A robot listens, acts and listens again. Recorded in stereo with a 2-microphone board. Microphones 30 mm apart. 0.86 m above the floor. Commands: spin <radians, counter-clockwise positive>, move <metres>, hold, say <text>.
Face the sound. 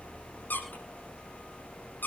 spin 1.57
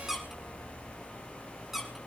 say Found it: a squeak, straight ahead, over 4 m away.